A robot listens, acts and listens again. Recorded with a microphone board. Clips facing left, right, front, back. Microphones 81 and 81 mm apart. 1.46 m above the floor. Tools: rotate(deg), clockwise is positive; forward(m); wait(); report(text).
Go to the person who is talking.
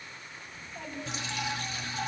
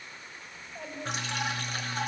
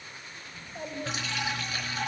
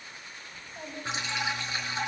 rotate(20)
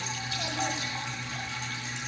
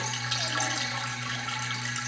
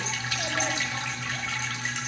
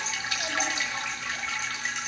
wait()
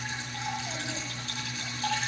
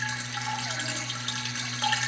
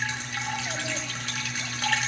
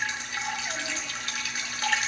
wait()
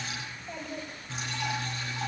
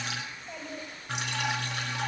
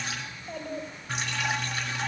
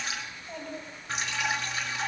forward(1.0)
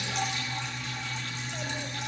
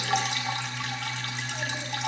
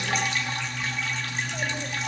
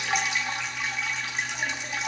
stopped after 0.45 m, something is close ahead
wait()
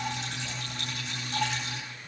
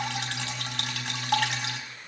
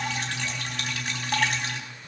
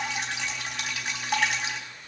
wait()
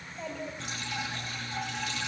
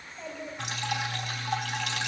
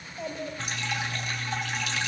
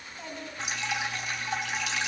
report("Something is in my way. I am facing the child speaking but have not reached it.")